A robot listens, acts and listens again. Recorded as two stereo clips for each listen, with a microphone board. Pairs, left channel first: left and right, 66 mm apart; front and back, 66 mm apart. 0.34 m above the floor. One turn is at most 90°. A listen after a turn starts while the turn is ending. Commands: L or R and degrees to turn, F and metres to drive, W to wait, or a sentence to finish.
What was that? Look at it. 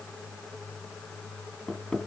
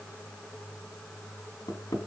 Facing the hammering.